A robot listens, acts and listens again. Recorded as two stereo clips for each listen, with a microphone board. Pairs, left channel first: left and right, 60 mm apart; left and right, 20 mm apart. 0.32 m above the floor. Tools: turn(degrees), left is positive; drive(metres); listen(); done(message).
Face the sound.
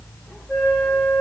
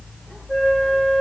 turn(degrees=30)
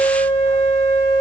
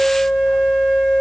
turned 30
turn(degrees=145)
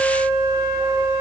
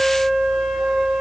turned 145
turn(degrees=15)
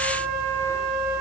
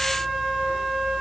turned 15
done("Found it: a flute, straight ahead.")